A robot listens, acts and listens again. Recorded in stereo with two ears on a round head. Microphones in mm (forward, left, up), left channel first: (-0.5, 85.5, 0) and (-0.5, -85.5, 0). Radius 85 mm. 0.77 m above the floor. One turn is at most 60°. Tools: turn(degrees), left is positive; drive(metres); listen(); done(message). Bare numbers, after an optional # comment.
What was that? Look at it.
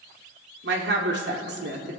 # The woman speaking: about 65° right or 115° right.
turn(-60)
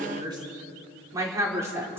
# So it is at 15° right.
turn(-15)
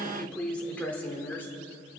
# The woman speaking is now 10° left.
turn(10)
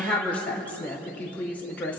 # The woman speaking is now 10° left.
turn(10)
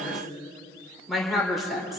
done("Found it: a woman speaking, straight ahead.")